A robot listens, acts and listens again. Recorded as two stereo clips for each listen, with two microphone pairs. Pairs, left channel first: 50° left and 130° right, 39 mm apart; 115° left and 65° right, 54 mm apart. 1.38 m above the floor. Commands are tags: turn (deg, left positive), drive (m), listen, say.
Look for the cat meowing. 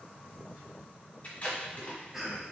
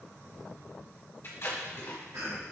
<listen/>
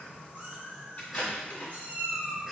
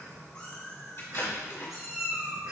<turn deg="-135"/>
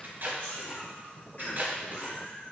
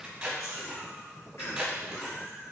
<turn deg="30"/>
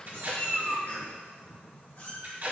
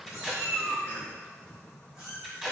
<turn deg="10"/>
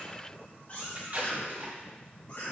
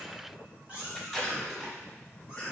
<say>Facing the cat meowing, 2 to 4 m away.</say>